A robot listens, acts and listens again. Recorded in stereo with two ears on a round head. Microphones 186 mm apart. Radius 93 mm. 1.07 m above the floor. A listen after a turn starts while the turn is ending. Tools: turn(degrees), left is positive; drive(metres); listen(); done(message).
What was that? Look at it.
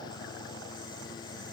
listen()
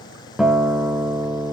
turn(degrees=-30)
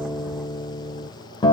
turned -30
turn(degrees=25)
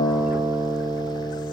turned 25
turn(degrees=-15)
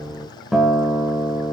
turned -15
done("Facing the guitar.")